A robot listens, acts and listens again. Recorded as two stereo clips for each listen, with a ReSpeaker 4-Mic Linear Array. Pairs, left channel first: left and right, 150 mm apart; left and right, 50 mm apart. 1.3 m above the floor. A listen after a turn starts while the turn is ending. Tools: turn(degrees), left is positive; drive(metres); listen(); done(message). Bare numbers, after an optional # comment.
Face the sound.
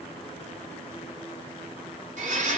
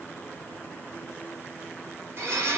# The blender: about 55° right or 125° right.
turn(-55)
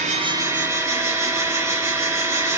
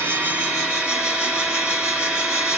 # So it is at 25° right.
turn(-25)
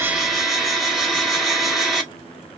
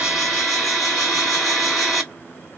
done("Facing the blender, 1 to 2 m away.")